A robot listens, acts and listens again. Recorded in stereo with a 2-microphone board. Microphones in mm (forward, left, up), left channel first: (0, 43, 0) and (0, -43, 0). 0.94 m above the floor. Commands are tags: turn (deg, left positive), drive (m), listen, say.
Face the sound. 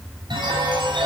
<turn deg="-70"/>
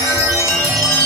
<turn deg="-40"/>
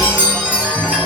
<turn deg="-15"/>
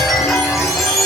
<say>Facing the chime, over 4 m away.</say>